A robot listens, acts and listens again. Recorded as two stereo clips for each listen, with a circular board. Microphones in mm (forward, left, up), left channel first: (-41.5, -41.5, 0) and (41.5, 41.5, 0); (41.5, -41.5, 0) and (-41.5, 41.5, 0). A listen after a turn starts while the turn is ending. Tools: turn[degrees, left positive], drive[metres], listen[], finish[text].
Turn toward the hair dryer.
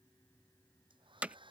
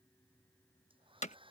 Thought: The hair dryer: 90° left.
Action: turn[90]
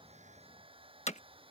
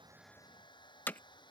Action: finish[Found it: a hair dryer, straight ahead.]